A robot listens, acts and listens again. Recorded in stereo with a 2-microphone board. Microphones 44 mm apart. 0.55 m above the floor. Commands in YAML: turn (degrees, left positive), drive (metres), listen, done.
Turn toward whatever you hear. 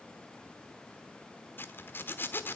turn: 50
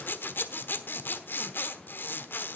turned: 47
turn: 65
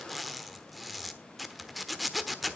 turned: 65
done: "Found it: a zipper, straight ahead."